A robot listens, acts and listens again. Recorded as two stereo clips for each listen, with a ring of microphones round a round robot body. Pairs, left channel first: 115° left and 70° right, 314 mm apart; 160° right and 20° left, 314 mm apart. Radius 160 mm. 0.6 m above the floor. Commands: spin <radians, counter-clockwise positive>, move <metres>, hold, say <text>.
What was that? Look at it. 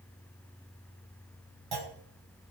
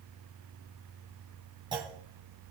spin -0.96
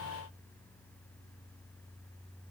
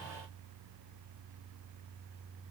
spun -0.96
say Facing where the clunk came from. I can't hear it now.